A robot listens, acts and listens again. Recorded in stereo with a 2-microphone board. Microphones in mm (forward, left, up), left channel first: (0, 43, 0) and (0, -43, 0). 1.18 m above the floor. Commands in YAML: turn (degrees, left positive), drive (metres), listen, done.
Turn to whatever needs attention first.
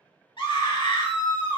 turn: 90
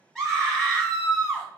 done: "Found it: a scream, straight ahead, 1 to 2 m away."